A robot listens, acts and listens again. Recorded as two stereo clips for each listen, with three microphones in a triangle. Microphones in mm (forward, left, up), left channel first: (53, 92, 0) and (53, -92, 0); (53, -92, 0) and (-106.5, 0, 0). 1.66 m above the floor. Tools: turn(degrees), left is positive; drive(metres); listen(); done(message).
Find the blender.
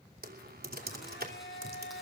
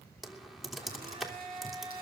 turn(degrees=95)
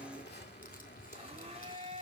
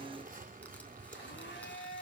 turn(degrees=-35)
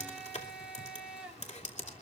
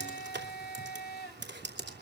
done("Facing the blender, over 4 m away.")